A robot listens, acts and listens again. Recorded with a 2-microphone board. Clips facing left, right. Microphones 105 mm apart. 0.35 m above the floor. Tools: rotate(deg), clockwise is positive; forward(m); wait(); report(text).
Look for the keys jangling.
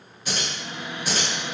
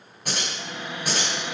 rotate(60)
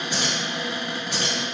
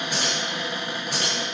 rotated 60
rotate(50)
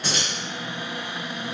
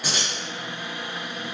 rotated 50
rotate(10)
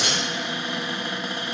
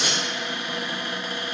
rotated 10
report("Found it: keys jangling, straight ahead.")